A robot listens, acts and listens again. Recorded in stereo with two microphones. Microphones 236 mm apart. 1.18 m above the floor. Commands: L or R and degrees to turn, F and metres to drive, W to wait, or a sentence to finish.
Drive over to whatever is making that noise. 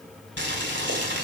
R50
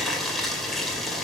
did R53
F1.0
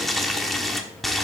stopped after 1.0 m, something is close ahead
Arrived at the boiling, straight ahead.